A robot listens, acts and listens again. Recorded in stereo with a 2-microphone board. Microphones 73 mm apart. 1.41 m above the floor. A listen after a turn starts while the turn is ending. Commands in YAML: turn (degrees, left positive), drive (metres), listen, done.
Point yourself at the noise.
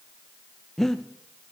turn: 30
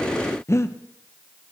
turn: 140
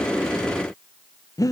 turn: 50
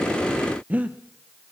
turn: -20
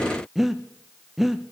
done: "Facing the breathing, under 1 m away."